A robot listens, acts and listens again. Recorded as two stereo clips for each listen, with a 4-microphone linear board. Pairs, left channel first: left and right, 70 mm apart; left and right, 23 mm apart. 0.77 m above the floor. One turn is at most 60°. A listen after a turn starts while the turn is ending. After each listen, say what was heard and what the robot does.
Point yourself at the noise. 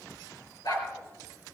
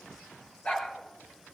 Turn 60° left.
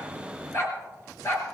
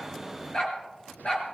So it is at 45° left. Turn 45° left.
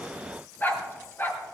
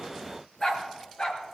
The dog barking is now 35° left. Turn 35° left.
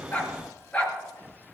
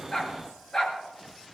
The dog barking is now 20° left. Turn 20° left.
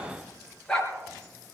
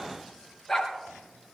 The dog barking is now 10° left. Turn 10° left.
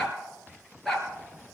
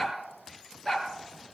Facing the dog barking.